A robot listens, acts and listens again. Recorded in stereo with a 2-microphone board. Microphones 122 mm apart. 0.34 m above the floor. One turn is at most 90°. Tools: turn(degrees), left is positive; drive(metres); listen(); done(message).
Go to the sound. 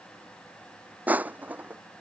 turn(degrees=-30)
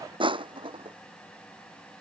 turn(degrees=-90)
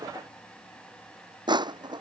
turn(degrees=-40)
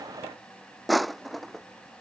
drive(metres=1.0)
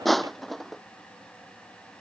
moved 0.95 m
drive(metres=1.0)
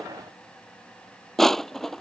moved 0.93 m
drive(metres=1.0)
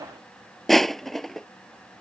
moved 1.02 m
drive(metres=1.0)
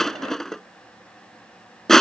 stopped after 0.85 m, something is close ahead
done("I am next to the crushing.")